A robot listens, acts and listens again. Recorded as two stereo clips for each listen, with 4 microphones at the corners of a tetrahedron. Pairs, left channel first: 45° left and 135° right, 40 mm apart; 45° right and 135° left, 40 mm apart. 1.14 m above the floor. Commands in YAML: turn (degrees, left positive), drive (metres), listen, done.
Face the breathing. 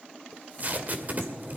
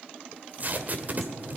turn: -65
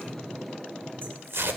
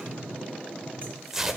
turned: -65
turn: -30
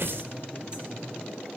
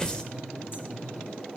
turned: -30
done: "Found it: breathing, straight ahead, over 4 m away."